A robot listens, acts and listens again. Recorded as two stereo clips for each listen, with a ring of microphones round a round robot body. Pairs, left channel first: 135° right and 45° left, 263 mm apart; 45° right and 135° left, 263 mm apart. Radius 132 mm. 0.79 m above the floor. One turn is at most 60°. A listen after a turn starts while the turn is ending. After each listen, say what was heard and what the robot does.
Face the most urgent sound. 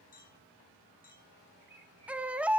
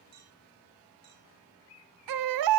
The baby crying: 130° left. Turn 60° left.
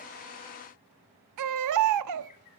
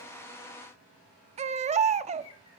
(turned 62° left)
The baby crying is now 70° left. Turn 60° left.
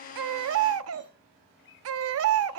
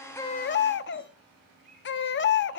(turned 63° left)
Facing the baby crying.